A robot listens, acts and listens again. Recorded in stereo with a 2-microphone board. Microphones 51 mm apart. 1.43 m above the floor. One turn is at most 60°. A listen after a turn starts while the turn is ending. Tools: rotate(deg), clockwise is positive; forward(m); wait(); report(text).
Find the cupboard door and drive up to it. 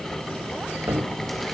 rotate(60)
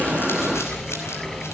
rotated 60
wait()
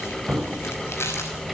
forward(1.0)
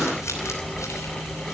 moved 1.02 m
wait()
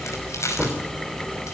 forward(1.0)
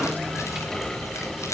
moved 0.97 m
wait()
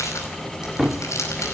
forward(1.0)
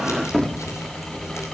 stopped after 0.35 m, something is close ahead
report("Arrived at the cupboard door, straight ahead.")